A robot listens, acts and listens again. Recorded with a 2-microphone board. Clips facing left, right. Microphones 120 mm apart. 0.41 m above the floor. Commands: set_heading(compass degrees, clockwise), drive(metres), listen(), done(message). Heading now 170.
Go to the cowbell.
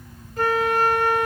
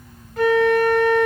listen()
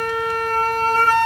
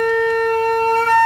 listen()
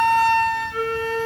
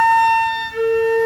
done("I can't make out a cowbell, only a flute.")